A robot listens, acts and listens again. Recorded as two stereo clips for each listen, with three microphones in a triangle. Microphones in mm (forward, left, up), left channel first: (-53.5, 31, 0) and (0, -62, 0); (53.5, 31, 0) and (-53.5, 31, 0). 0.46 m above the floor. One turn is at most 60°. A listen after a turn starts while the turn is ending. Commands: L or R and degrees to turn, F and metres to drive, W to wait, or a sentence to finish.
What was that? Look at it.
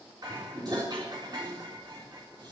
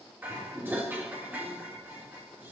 R60
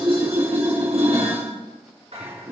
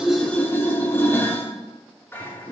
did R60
R60
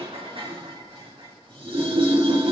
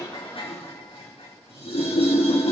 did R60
R25
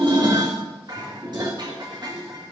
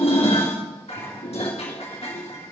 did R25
R10
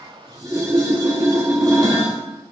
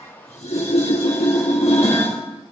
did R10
Found it: dishes clattering, straight ahead, 2 to 4 m away.